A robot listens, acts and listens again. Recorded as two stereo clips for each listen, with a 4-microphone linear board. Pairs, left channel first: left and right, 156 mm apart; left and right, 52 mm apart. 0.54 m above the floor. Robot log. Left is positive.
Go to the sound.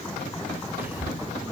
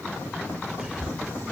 cmd yaw -30
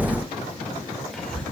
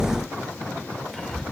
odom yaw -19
cmd fwd 1.0
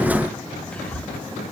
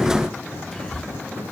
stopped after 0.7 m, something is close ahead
note: The whispering is now 10° left.
cmd yaw +10
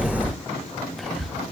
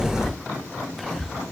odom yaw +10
end: Arrived at the whispering, straight ahead.